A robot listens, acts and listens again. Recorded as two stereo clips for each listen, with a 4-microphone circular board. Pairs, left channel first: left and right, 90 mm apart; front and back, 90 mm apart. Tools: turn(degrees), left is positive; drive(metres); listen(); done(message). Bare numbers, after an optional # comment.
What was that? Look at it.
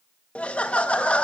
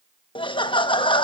# The laughter: 15° left.
turn(15)
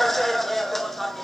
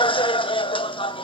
done("Facing the laughter, under 1 m away.")